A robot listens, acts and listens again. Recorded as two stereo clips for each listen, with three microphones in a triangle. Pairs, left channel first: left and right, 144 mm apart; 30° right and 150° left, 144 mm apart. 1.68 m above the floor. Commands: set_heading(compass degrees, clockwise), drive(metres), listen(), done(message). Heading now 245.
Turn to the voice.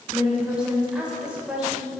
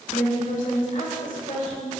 set_heading(255)
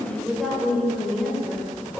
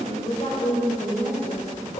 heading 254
done("Found it: a woman speaking, straight ahead, 1 to 2 m away.")